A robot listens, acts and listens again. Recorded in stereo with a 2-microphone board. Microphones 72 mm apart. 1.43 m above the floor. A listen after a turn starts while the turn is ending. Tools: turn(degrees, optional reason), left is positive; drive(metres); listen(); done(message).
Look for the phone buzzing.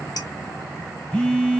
turn(degrees=30)
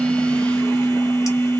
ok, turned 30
turn(degrees=135, reason="So it is at 135° left.")
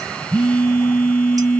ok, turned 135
turn(degrees=15, reason="The phone buzzing is now 15° left.")
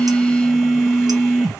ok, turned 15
done("Found it: a phone buzzing, straight ahead.")